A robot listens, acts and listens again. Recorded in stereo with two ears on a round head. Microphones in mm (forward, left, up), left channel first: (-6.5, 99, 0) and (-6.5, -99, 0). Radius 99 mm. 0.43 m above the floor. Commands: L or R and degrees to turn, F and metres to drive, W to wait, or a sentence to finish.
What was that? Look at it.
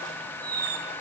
R45
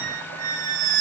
R90
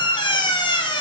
L20
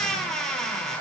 Found it: a squeak, straight ahead.